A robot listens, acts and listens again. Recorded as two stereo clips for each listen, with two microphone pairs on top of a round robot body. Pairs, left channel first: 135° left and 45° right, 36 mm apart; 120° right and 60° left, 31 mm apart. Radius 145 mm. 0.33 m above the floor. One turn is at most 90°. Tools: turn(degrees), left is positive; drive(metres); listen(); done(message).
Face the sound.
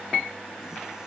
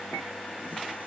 listen()
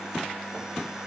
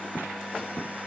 listen()
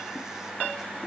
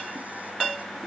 done("I can't make out anything.")